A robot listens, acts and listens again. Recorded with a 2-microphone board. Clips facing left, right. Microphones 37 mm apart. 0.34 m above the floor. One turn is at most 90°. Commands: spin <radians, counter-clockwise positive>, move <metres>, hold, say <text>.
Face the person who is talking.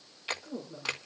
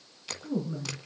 spin -0.61
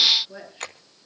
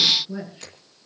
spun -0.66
say Facing the woman speaking, over 4 m away.